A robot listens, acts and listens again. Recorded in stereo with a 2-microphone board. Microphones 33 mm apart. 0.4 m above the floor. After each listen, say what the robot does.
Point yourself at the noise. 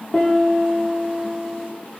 Turn 30° left.
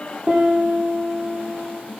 Turn 20° right.
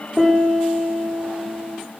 Found it: a piano, straight ahead, over 4 m away.